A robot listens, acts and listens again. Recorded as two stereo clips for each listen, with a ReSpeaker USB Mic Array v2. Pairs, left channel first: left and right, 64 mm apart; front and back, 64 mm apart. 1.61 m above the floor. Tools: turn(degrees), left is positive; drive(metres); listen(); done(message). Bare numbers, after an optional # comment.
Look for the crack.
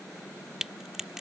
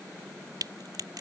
# The crack: 175° right.
turn(-175)
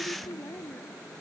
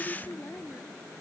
done("Facing where the crack came from. I can't hear it now.")